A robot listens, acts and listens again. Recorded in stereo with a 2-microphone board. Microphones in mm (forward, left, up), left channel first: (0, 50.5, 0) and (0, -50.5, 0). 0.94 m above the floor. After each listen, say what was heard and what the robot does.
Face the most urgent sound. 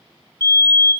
The fire alarm: about 30° left or 150° left. Turn 30° left.
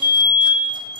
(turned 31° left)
So it is at 110° left. Turn 110° left.
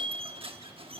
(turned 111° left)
Keep listening.
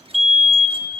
Facing the fire alarm, 2 to 4 m away.